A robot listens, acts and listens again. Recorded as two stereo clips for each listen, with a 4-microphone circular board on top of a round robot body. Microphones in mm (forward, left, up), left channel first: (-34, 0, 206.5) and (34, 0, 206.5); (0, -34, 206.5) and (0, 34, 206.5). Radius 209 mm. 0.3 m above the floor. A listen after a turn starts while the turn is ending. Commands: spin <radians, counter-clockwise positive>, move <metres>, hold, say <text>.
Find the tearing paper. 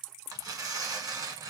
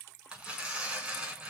spin 0.26
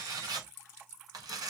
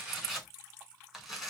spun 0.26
say Found it: tearing paper, straight ahead.